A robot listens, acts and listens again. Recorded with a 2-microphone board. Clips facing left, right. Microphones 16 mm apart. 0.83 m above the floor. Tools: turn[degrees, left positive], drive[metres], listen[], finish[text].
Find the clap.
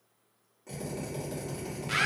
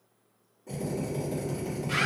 Action: listen[]
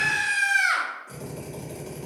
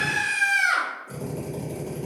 Action: listen[]
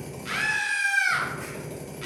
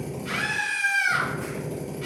Action: finish[I can't make out a clap to turn to.]